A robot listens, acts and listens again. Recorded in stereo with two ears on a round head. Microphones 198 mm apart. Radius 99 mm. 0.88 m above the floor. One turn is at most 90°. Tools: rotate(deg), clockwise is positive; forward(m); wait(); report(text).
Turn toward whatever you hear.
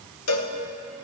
rotate(-90)
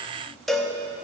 report("Found it: a cowbell, straight ahead, under 1 m away.")